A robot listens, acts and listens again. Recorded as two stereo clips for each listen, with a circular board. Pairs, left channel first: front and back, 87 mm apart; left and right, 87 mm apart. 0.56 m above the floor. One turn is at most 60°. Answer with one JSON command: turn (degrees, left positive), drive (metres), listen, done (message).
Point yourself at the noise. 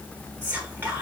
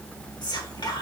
{"turn": 60}
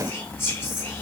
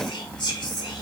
{"turn": 60}
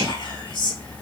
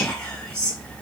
{"turn": 15}
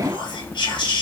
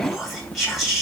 {"done": "Found it: whispering, straight ahead."}